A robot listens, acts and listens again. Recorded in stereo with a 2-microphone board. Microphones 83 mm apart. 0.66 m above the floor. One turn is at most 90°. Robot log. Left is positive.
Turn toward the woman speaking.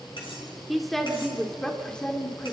note: The woman speaking: about 15° left or 165° left.
cmd yaw +15
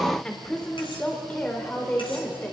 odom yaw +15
note: The woman speaking: about 25° left or 155° left.
cmd yaw +25
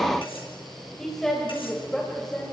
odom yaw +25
cmd yaw +30
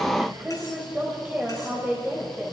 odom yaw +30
note: So it is at 20° right.
cmd yaw -20
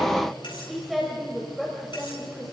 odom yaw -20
end: Found it: a woman speaking, straight ahead.